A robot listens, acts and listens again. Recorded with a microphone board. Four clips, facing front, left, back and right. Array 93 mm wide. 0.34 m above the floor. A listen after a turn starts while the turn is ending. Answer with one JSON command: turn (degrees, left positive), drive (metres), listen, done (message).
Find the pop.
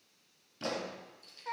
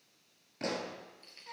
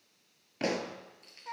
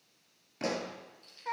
{"turn": -175}
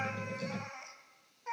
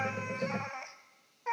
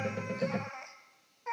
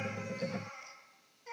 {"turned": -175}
{"done": "Facing where the pop came from. I can't hear it now."}